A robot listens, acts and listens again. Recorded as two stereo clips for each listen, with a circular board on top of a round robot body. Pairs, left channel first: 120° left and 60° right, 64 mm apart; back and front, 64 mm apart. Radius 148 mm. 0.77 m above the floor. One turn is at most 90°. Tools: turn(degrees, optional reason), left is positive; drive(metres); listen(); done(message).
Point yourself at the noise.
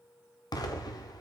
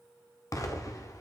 turn(degrees=90, reason="The explosion: 140° left.")
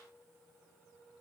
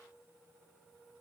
turn(degrees=50, reason="Nothing new. It was at 50° left.")
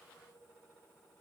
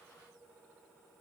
done("I heard an explosion from this way, but can't make it out now.")